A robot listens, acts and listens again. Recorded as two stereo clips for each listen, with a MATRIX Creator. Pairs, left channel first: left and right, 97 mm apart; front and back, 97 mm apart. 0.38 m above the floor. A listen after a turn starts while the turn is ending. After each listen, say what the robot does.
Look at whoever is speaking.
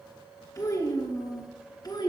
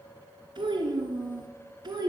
Turn 135° left.
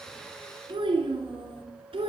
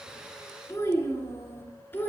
Turn 70° right.
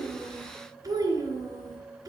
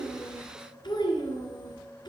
Turn 40° right.
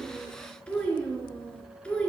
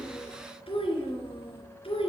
Turn 10° left.
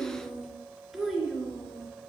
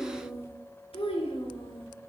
Found it: a child speaking, straight ahead.